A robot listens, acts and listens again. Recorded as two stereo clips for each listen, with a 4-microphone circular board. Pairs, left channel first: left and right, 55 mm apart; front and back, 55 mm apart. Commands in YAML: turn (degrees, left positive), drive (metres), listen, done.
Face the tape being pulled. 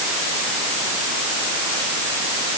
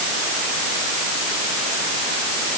listen: true
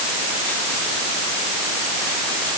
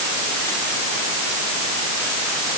listen: true
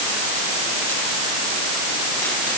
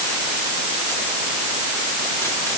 done: "I can't make out tape being pulled."